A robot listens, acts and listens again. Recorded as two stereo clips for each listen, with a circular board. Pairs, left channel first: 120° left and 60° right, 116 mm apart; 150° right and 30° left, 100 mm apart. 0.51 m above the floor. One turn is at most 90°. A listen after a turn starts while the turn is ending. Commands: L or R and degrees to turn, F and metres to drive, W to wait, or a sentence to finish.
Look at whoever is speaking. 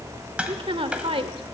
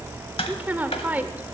R40
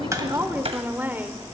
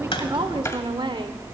L10
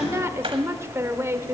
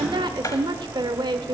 Found it: a woman speaking, straight ahead, 1 to 2 m away.